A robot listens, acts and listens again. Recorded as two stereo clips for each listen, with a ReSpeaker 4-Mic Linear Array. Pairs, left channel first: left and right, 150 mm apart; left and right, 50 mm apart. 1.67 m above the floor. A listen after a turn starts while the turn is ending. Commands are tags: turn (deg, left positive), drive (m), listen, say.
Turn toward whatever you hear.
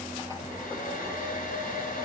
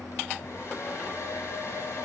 <turn deg="70"/>
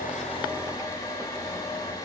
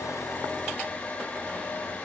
<turn deg="25"/>
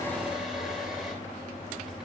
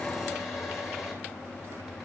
<say>Found it: a hair dryer, straight ahead.</say>